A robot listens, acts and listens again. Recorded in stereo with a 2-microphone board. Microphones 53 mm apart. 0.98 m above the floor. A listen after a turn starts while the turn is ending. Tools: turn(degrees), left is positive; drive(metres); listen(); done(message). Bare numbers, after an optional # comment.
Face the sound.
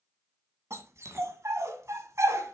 # The dog barking: about 65° right or 115° right.
turn(-65)
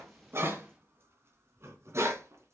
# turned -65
# So it is at 60° right.
turn(-60)
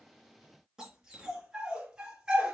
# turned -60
# The dog barking is now 20° right.
turn(-20)
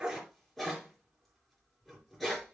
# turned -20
done("Facing the dog barking.")